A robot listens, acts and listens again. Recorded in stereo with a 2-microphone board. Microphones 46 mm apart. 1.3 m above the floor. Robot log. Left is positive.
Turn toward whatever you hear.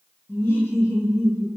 note: The laughter: about 70° left or 110° left.
cmd yaw +70
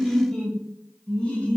note: So it is at 25° left.
cmd yaw +25
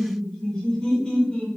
note: The laughter is now 25° left.
cmd yaw +25
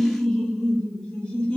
note: The laughter is now 20° left.
cmd yaw +20
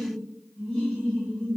end: Facing the laughter, 1 to 2 m away.